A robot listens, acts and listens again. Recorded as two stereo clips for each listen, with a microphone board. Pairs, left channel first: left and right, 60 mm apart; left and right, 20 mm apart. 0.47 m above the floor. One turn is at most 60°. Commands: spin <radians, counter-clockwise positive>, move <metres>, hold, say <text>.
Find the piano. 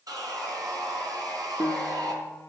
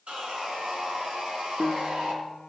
spin 0.61
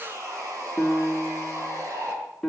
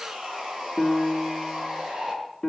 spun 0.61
say Found it: a piano, straight ahead, 1 to 2 m away.